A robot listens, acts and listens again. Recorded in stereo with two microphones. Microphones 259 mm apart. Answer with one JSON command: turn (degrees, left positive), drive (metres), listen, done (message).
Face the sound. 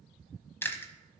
{"turn": 30}
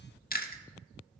{"turn": 140}
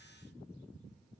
{"listen": true}
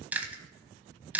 {"done": "Facing the chewing."}